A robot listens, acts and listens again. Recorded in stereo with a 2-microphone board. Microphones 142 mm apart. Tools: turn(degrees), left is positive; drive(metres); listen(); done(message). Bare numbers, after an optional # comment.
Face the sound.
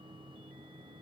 listen()
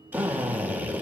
turn(-30)
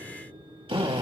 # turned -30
# So it is at 135° right.
turn(-135)
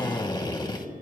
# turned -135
# The drill is now 35° left.
turn(35)
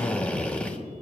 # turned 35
# The drill is now 10° left.
turn(10)
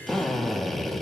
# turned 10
done("Found it: a drill, straight ahead, 2 to 4 m away.")